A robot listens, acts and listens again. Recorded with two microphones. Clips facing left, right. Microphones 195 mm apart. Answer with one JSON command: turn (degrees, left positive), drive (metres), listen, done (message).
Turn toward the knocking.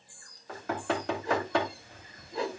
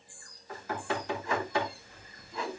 {"turn": 90}
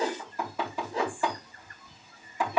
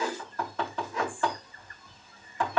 {"turn": 10}
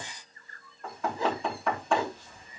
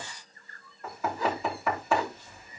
{"done": "Found it: knocking, straight ahead, 2 to 4 m away."}